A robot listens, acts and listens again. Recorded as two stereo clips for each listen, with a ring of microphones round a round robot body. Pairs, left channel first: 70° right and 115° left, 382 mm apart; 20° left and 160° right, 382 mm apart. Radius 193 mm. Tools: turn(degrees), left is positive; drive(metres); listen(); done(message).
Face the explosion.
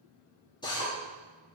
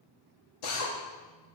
listen()
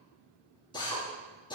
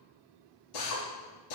listen()
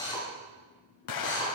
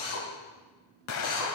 turn(degrees=-25)
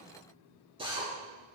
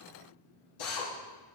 done("Facing where the explosion came from. I can't hear it now.")